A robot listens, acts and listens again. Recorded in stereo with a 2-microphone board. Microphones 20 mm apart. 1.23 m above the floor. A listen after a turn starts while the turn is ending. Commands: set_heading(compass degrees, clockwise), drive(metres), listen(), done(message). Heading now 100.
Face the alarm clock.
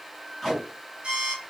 set_heading(175)
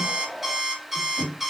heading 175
set_heading(195)
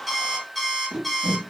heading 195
done("Facing the alarm clock.")